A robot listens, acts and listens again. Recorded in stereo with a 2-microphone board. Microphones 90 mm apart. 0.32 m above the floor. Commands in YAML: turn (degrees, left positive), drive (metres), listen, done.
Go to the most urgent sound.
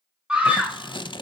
turn: -30
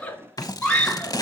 turn: 15
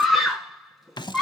drive: 1.0
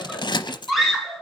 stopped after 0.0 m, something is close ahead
done: "Something is in my way. I am facing the scream but have not reached it."